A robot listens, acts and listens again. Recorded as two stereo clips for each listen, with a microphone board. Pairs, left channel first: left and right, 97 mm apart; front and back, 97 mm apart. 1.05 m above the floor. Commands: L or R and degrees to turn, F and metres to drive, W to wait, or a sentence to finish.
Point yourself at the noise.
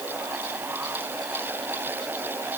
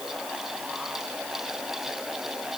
W
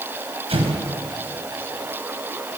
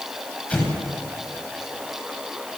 R75
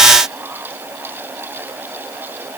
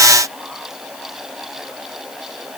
Facing where the explosion came from. I can't hear it now.